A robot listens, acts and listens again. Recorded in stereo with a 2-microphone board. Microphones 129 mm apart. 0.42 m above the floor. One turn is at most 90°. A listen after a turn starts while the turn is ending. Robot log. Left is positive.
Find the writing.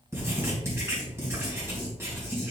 note: The writing: about 20° right or 160° right.
cmd yaw -20
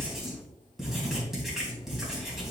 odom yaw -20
end: Found it: writing, straight ahead.